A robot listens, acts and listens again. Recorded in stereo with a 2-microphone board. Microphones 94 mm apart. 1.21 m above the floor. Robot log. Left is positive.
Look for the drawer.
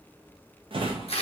note: The drawer: about 60° right or 120° right.
cmd yaw -60
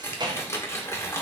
note: So it is at 50° right.
cmd yaw -50
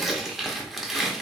cmd idle
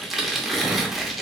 cmd idle
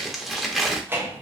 note: The drawer is now 25° right.
cmd yaw -25
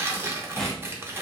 end: Facing the drawer.